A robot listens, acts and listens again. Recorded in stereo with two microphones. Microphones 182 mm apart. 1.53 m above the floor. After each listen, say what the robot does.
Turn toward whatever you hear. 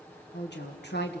Turn 90° left.
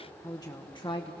Turn 35° left.
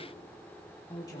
Turn 20° left.
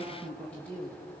Turn 10° left.
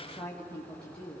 Turn 10° left.
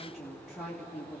Found it: a woman speaking, straight ahead, 2 to 4 m away.